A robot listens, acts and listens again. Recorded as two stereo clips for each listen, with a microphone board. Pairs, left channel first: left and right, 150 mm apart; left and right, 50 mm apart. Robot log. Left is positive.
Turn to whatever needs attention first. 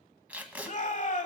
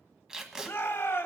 note: The shout: about 55° left or 125° left.
cmd yaw +55
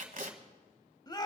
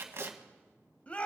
note: So it is at 35° left.
cmd yaw +35
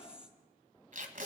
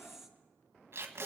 cmd idle
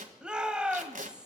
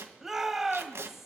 end: Facing the shout, 1 to 2 m away.